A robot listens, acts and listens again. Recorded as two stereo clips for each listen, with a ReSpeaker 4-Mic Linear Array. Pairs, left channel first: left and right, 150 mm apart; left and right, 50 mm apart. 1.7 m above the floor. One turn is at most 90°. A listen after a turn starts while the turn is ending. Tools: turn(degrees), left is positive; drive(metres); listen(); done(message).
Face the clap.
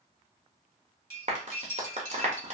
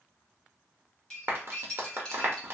turn(degrees=-50)
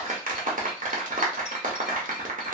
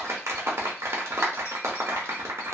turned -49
turn(degrees=-75)
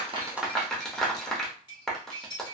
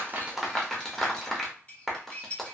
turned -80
done("Facing the clap, under 1 m away.")